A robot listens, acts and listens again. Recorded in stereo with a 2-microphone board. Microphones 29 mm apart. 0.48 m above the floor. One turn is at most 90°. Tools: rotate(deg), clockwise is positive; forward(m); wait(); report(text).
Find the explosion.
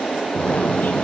rotate(-50)
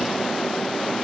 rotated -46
wait()
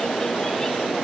report("I heard an explosion, but can't make it out now. It was about straight ahead or 85° left.")